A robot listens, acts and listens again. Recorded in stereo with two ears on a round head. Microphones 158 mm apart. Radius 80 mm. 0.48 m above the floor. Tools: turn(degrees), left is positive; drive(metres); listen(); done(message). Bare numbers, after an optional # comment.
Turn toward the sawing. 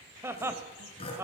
# The sawing: about 30° left or 150° left.
turn(30)
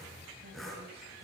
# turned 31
done("Found it: sawing, straight ahead.")